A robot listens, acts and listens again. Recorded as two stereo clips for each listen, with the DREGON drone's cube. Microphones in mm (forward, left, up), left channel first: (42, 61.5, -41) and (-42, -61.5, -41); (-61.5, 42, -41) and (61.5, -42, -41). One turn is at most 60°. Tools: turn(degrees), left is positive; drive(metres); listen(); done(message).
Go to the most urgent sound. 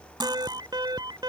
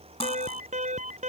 turn(degrees=-60)
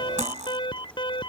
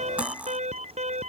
drive(metres=1.0)
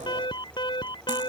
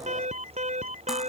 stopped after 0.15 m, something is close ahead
done("Blocked. The alarm is further on, straight ahead.")